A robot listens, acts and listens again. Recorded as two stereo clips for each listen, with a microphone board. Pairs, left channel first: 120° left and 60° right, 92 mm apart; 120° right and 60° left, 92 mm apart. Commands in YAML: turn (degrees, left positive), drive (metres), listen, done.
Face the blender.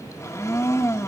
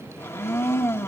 turn: 180
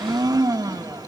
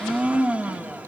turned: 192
turn: -15
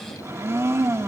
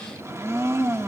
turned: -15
done: "Found it: a blender, straight ahead."